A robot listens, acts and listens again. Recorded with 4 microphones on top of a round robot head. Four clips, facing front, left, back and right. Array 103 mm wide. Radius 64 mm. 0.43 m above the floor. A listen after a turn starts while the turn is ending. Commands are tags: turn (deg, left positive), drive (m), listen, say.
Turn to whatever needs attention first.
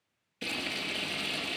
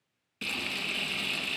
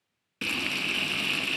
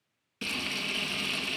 <listen/>
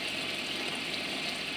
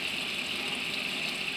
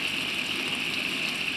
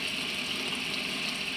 <listen/>
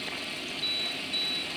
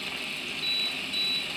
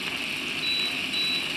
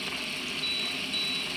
<turn deg="120"/>
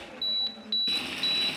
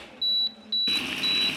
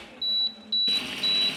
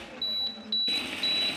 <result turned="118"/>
<say>Facing the alarm, 1 to 2 m away.</say>